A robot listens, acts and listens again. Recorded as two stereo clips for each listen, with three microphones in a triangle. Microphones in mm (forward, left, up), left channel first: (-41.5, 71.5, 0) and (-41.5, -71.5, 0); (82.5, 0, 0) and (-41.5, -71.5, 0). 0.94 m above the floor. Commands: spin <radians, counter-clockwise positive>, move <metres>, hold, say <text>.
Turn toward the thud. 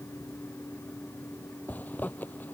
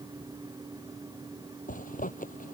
hold
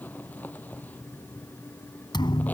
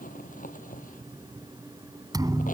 spin 2.62
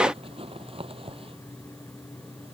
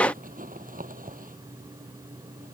say I heard a thud from this way, but can't make it out now.